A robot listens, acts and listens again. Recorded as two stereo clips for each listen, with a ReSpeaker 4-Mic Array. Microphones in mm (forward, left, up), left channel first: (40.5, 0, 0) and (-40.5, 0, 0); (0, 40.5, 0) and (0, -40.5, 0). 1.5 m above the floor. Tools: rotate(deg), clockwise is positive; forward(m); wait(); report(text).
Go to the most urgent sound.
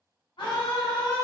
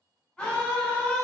rotate(-10)
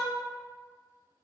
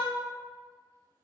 forward(1.0)
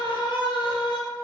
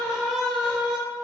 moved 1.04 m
forward(1.0)
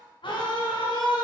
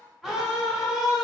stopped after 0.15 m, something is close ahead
report("I am next to the scream.")